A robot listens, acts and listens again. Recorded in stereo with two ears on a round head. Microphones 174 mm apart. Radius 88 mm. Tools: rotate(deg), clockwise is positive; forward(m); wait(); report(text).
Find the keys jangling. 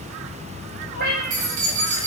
rotate(40)
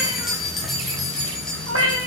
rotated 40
report("Facing the keys jangling, 2 to 4 m away.")